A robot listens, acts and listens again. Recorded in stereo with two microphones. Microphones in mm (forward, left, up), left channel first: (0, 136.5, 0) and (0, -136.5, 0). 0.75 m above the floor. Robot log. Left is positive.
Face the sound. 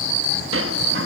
note: The sliding door: about 50° right or 130° right.
cmd yaw -50
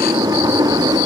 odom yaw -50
note: So it is at 15° right.
cmd yaw -15
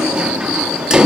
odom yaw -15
end: Facing the sliding door.